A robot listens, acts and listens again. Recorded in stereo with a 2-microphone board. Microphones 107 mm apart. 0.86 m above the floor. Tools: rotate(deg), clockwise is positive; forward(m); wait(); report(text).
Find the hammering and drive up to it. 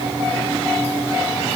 wait()
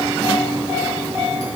wait()
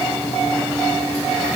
report("I can't make out hammering to turn to.")